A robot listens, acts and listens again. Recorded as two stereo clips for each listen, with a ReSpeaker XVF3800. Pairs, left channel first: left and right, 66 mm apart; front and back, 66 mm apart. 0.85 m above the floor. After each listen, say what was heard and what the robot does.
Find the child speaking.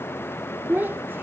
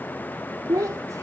The child speaking: 150° right. Turn 150° right.
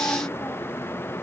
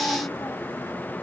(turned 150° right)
Keep listening.
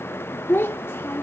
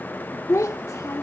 The child speaking is now 35° left. Turn 35° left.
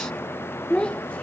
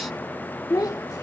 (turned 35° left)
The child speaking is now 15° left. Turn 15° left.
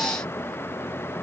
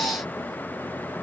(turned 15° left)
Keep listening.
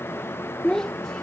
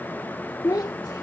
The child speaking is now 10° left. Turn 10° left.
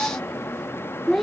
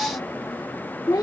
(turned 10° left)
Found it: a child speaking, straight ahead.